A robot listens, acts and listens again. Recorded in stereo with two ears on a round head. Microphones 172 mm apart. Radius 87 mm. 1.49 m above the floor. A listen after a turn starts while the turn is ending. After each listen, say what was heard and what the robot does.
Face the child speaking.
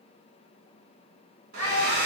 Turn 90° right.
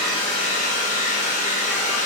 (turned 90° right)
Keep listening.
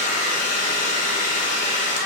Keep listening.
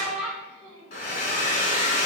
Facing the child speaking.